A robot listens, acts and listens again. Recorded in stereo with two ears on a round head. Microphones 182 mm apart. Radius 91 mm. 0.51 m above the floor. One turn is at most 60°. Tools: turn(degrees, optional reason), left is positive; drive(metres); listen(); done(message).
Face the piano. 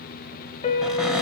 turn(degrees=35, reason="The piano: about 35° left or 145° left.")
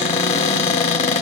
listen()
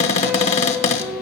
done("Found it: a piano, straight ahead, 1 to 2 m away.")